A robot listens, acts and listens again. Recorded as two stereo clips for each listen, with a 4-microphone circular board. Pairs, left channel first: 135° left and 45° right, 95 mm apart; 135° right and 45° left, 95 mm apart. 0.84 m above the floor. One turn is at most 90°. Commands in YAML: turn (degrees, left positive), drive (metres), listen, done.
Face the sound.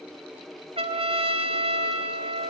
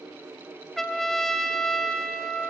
turn: -50
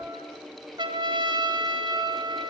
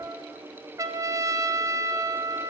turn: -10
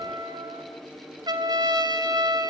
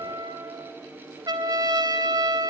done: "Found it: a trumpet, straight ahead, 2 to 4 m away."